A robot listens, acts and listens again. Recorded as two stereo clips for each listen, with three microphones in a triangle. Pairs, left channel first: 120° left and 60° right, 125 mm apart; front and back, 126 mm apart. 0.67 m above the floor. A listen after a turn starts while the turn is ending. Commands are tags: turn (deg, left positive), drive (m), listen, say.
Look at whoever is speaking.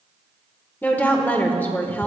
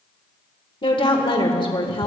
<turn deg="45"/>
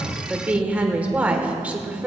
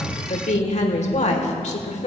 <turn deg="20"/>
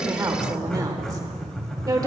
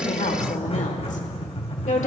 <say>Found it: a woman speaking, straight ahead.</say>